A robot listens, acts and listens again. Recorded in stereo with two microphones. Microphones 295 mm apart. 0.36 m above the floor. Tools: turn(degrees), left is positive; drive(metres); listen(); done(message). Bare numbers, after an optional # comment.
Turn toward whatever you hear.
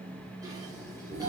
turn(-30)
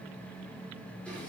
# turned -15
listen()
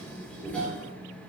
done("Facing the dishes clattering, 2 to 4 m away.")